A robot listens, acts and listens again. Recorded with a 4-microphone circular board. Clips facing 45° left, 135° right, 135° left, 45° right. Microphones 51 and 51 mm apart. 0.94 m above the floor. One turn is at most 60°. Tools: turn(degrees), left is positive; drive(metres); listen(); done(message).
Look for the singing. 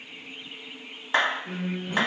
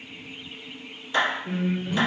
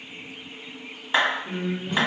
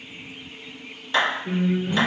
turn(degrees=-50)
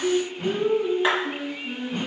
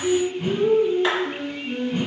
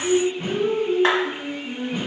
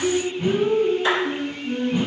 turn(degrees=35)
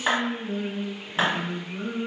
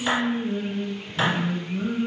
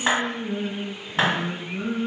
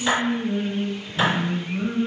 turn(degrees=40)
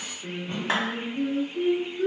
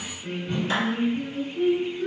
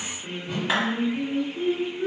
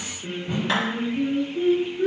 done("Found it: singing, straight ahead.")